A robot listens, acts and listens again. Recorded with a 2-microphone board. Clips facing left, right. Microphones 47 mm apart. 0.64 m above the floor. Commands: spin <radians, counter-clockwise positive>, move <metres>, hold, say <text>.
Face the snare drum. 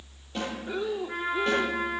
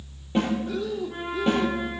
spin -0.44
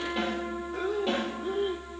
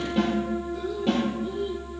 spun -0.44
say Found it: a snare drum, straight ahead.